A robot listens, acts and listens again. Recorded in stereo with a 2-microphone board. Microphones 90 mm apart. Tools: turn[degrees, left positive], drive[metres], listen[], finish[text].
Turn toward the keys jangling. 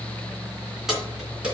Action: turn[-30]
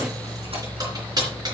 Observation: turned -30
Thought: So it is at 135° right.
Action: turn[-135]
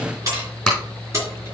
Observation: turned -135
Thought: The keys jangling is now 30° right.
Action: turn[-30]
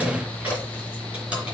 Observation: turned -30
Thought: The keys jangling is now 10° right.
Action: turn[-10]
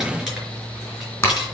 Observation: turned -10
Action: finish[Facing the keys jangling, over 4 m away.]